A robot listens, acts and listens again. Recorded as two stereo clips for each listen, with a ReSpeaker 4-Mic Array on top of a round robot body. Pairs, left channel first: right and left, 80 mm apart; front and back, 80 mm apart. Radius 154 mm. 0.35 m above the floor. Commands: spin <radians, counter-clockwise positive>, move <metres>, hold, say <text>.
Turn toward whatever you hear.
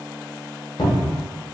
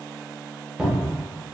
spin -1.75
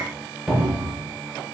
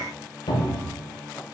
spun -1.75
say Found it: a cupboard door, straight ahead.